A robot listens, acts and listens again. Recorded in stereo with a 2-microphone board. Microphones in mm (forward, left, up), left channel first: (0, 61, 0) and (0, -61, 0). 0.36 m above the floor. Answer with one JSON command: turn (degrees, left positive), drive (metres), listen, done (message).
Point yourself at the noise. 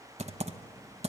{"turn": -65}
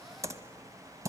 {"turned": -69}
{"turn": -30}
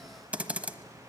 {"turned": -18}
{"turn": -15}
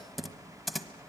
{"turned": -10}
{"done": "Facing the typing on a keyboard."}